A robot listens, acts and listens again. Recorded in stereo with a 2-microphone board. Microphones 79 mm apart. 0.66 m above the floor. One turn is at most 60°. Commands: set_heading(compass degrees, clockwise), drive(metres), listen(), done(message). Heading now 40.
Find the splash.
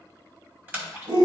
set_heading(65)
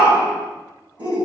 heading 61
listen()
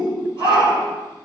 done("I heard a splash, but can't make it out now. It was about 5° right or 135° right.")